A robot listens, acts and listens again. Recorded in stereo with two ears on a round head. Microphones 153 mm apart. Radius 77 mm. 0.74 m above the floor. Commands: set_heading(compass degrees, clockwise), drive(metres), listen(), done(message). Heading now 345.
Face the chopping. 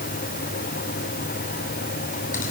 listen()
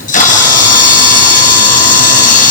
listen()
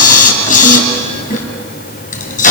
done("I can't make out chopping to turn to.")